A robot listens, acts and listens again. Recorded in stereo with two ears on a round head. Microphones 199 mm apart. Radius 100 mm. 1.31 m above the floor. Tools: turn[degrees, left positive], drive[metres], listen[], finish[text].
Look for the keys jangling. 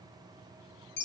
Action: listen[]
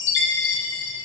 Action: listen[]
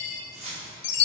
Thought: The keys jangling: about 30° right or 150° right.
Action: turn[-30]
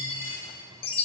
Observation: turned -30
Action: listen[]
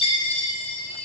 Action: listen[]
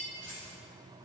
Action: finish[I heard keys jangling, but can't make it out now. It was about straight ahead or 120° right.]